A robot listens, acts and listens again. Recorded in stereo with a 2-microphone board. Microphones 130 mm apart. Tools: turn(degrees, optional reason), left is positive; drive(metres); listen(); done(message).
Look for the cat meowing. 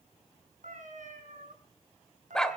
turn(degrees=-90)
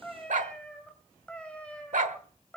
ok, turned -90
turn(degrees=10, reason="So it is at 10° left.")
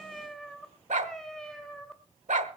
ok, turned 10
done("Facing the cat meowing.")